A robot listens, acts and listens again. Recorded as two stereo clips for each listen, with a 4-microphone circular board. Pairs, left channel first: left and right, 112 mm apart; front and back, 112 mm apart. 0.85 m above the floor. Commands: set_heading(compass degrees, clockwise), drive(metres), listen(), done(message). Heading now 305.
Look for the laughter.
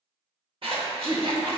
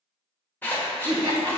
set_heading(75)
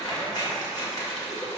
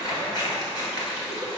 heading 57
set_heading(77)
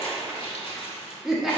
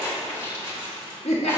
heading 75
done("Found it: laughter, straight ahead, under 1 m away.")